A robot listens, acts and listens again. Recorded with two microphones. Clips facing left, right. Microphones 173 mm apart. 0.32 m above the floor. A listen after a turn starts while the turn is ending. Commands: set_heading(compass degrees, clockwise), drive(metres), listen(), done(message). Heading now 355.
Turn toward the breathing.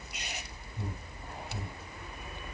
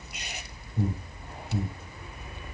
set_heading(85)
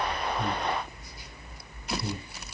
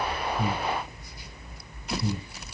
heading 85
done("Found it: breathing, straight ahead, 2 to 4 m away.")